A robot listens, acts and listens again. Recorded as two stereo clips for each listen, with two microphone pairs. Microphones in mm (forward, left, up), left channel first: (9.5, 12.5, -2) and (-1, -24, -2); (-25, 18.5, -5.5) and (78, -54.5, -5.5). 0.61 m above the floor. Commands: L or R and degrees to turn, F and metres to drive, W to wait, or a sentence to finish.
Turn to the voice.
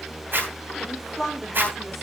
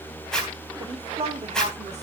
R10
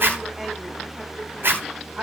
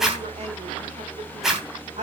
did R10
R40
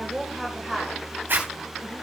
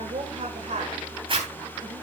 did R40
R15
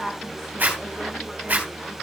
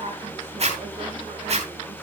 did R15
W
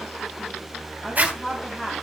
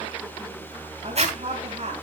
R10
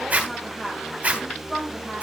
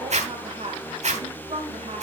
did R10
Found it: a woman speaking, straight ahead, 2 to 4 m away.